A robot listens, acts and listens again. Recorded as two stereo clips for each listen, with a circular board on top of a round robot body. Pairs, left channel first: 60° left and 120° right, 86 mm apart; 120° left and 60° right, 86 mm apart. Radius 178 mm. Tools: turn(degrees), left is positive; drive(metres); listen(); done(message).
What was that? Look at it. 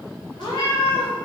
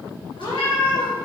turn(degrees=95)
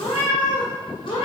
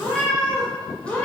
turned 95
turn(degrees=45)
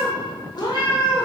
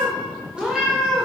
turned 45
turn(degrees=30)
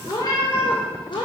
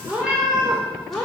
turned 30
turn(degrees=35)
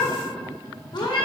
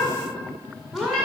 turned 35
turn(degrees=30)
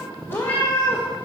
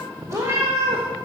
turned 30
done("Facing the cat meowing.")